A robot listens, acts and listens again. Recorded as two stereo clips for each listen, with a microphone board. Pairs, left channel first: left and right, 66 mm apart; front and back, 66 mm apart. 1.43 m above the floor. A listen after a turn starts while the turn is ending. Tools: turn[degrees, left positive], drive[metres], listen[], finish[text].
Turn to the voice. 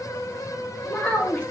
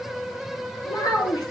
Thought: The child speaking: 15° left.
Action: turn[15]
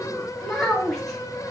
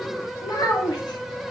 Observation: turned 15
Action: finish[Found it: a child speaking, straight ahead.]